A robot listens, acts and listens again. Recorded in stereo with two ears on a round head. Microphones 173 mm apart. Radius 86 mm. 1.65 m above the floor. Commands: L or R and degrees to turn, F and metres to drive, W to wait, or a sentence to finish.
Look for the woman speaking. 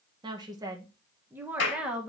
R30
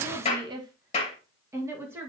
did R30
R30
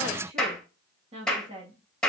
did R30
R150
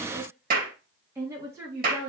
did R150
R15
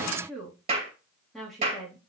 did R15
Facing the woman speaking, 2 to 4 m away.